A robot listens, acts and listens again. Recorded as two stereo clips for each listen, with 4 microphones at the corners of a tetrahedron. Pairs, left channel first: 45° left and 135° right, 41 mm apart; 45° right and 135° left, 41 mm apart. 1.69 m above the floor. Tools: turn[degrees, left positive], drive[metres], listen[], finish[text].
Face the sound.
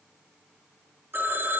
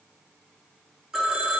Thought: The phone ringing: 150° right.
Action: turn[-150]
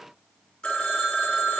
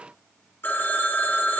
Thought: The phone ringing is now 20° right.
Action: turn[-20]
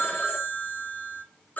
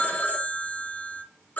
Action: finish[Found it: a phone ringing, straight ahead.]